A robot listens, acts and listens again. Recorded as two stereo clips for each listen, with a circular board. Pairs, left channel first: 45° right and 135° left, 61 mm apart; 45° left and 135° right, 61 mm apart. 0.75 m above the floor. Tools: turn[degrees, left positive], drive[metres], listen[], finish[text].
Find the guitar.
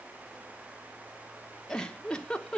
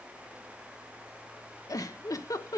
Action: listen[]
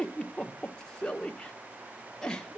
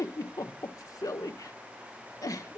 Action: listen[]
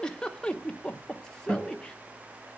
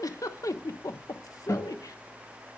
Thought: The guitar: 95° left.
Action: turn[95]
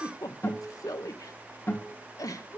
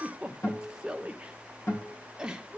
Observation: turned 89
Action: finish[Found it: a guitar, straight ahead, over 4 m away.]